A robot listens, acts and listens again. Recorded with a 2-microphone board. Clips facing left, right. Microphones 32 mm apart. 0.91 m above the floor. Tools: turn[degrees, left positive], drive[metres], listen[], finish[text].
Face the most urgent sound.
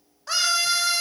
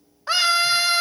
Thought: The scream: about 30° right or 150° right.
Action: turn[-30]
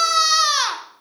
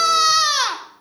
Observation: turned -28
Action: finish[Found it: a scream, straight ahead, 1 to 2 m away.]